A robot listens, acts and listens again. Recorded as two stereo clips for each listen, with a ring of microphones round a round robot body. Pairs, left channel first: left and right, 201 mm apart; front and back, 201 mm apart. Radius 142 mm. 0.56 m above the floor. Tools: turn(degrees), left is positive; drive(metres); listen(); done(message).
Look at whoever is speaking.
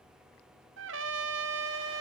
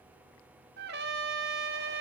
listen()
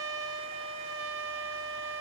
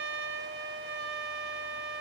listen()
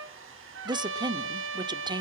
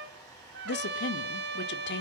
turn(degrees=-25)
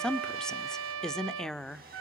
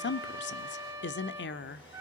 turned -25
done("Facing the woman speaking.")